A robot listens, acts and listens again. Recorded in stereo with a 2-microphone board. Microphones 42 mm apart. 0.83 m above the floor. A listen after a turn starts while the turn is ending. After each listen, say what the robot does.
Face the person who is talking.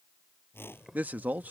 Turn 45° right.
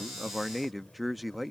Facing the man speaking.